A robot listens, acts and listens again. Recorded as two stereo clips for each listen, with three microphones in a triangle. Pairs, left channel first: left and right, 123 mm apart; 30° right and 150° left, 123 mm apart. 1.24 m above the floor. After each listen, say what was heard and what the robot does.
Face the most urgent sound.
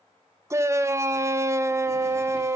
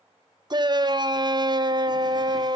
The shout: 155° right. Turn 155° right.
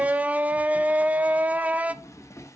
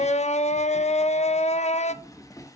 The shout is now 10° right. Turn 10° right.
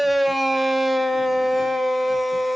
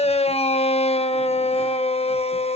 Facing the shout.